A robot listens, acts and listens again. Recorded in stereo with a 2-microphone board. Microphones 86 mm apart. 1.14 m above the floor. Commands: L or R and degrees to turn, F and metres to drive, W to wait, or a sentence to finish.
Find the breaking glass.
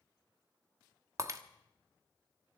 R40
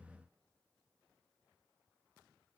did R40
W
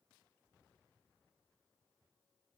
I heard breaking glass, but can't make it out now. It was about straight ahead or 100° right.